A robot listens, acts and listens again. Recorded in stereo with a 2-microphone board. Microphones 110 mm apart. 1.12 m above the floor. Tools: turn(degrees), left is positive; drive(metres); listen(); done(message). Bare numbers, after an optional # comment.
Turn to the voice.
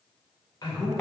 # The man speaking: about 35° left or 145° left.
turn(35)
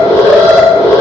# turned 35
listen()
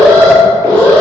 listen()
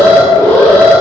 done("I heard a man speaking, but can't make it out now. It was about straight ahead or 110° left.")